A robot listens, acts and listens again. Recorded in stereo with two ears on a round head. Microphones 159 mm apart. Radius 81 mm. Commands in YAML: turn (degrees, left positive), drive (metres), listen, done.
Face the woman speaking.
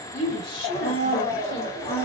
turn: 55
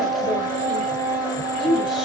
done: "Found it: a woman speaking, straight ahead, 1 to 2 m away."